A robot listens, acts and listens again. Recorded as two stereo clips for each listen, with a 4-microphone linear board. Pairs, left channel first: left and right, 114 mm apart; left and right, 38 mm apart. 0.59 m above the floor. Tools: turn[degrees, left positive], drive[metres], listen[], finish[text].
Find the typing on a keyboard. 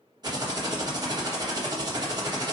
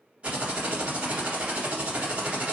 Thought: The typing on a keyboard: about 35° right or 145° right.
Action: turn[-35]
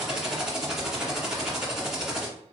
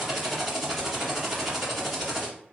Action: finish[Facing the typing on a keyboard.]